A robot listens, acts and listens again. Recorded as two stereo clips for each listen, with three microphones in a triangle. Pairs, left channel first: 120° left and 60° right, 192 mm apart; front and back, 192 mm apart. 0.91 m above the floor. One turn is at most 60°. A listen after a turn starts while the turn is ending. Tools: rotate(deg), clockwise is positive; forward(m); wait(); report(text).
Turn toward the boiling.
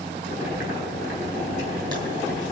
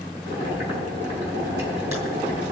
rotate(-60)
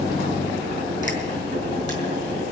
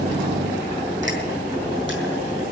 rotate(-60)
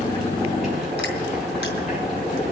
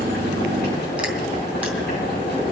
rotate(-30)
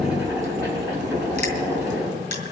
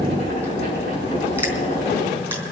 rotate(-15)
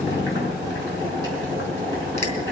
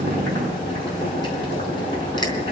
report("Facing the boiling, over 4 m away.")